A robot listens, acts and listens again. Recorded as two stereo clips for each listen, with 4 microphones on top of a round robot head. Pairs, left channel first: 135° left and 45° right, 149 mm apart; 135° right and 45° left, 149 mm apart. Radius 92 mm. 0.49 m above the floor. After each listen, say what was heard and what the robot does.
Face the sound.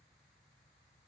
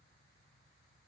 Keep listening.
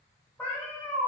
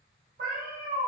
The cat meowing: 65° left. Turn 65° left.
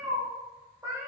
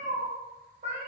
The cat meowing is now 25° left. Turn 25° left.
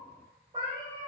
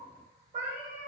The cat meowing is now 15° left. Turn 15° left.
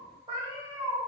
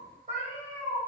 The cat meowing is now 15° left. Turn 15° left.
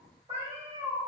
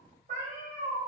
Facing the cat meowing, 1 to 2 m away.